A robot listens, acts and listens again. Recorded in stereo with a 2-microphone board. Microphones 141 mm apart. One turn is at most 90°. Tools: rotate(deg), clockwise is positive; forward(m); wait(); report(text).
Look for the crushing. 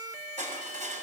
rotate(60)
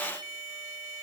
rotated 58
wait()
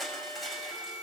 report("Facing the crushing, over 4 m away.")